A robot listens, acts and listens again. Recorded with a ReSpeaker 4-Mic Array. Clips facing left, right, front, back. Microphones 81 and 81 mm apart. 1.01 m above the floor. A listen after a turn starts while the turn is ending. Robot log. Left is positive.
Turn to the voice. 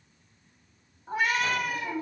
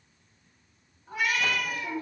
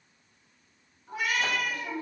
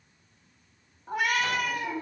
note: The woman speaking: 100° right.
cmd yaw -100
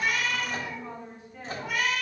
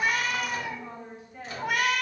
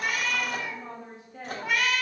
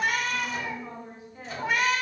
end: Found it: a woman speaking, straight ahead.